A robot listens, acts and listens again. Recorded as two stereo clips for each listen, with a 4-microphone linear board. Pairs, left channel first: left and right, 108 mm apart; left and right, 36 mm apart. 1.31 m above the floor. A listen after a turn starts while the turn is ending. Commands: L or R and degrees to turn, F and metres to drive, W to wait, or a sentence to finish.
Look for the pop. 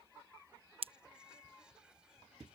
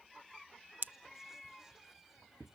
R60
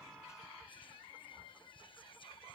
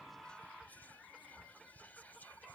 W
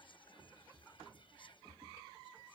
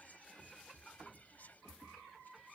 I heard a pop, but can't make it out now. It was about straight ahead or 60° right.